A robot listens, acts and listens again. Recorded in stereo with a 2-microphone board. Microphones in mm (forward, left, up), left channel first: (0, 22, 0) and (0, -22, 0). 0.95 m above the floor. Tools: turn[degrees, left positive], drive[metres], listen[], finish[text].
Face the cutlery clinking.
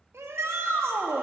Action: listen[]
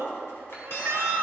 Thought: The cutlery clinking: about 65° left or 115° left.
Action: turn[65]
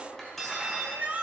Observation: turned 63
Action: finish[Found it: cutlery clinking, straight ahead.]